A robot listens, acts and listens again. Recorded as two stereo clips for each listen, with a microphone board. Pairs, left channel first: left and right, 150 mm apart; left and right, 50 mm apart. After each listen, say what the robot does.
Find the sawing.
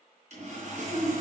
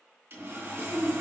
Turn 50° right.
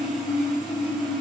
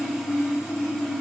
Facing the sawing, 2 to 4 m away.